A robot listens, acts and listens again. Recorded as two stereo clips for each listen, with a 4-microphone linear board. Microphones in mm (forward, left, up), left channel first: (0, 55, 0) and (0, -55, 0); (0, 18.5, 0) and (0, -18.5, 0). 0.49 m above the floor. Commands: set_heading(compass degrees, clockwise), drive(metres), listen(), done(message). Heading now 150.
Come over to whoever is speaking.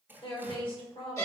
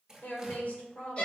set_heading(100)
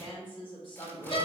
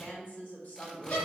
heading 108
set_heading(33)
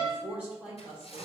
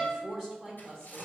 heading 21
set_heading(36)
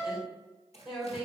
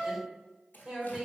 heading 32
drive(1.0)
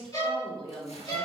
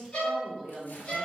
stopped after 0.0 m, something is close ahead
done("Blocked. The woman speaking is further on, straight ahead.")